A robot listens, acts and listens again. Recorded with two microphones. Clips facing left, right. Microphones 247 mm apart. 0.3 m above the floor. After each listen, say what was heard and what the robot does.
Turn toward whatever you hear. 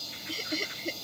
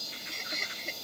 The laughter: about 40° left or 140° left. Turn 40° left.
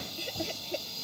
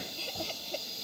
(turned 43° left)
So it is at 20° left. Turn 20° left.
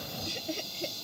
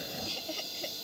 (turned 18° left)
The laughter is now 25° left. Turn 25° left.
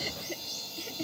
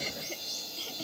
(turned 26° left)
The laughter is now 20° left. Turn 20° left.
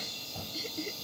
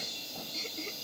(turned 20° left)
The laughter is now 10° left. Turn 10° left.
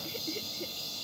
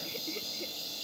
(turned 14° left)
Found it: laughter, straight ahead.